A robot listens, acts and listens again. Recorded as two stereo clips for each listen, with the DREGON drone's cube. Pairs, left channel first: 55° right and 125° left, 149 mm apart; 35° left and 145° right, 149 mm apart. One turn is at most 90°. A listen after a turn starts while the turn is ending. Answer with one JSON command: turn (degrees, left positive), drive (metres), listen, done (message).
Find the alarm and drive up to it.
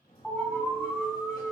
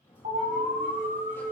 {"turn": -90}
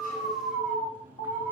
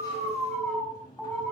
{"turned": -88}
{"turn": -50}
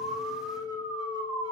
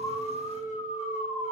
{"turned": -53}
{"drive": 1.0}
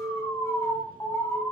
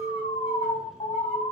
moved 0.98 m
{"turn": 10}
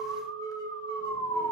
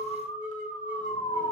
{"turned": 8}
{"drive": 1.0}
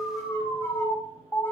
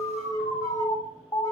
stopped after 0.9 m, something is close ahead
{"done": "Arrived at the alarm, straight ahead."}